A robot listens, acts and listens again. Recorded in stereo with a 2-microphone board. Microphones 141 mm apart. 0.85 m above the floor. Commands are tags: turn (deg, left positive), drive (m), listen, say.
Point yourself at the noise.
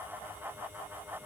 <listen/>
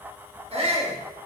<turn deg="-45"/>
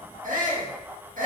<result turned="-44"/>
<turn deg="-85"/>
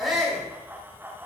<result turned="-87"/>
<say>Facing the shout.</say>